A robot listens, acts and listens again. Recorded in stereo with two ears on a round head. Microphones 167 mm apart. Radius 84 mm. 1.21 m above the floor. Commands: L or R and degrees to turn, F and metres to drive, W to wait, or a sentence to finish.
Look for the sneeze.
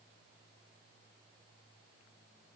W
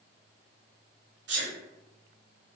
R65
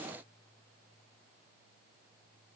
W
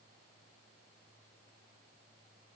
I heard a sneeze, but can't make it out now. It was about straight ahead or 50° right.